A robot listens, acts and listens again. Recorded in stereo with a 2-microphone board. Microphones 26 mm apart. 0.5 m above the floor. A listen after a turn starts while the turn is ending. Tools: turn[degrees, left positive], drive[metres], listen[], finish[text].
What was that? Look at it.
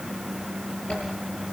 Thought: The zipper: about 40° left or 140° left.
Action: turn[40]
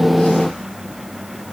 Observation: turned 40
Action: listen[]
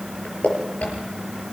Thought: So it is at 100° left.
Action: turn[100]
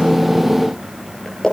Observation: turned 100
Thought: The zipper is now 25° left.
Action: turn[25]
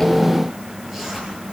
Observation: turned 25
Thought: The zipper is now 15° right.
Action: turn[-15]
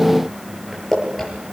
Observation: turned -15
Action: finish[Facing the zipper.]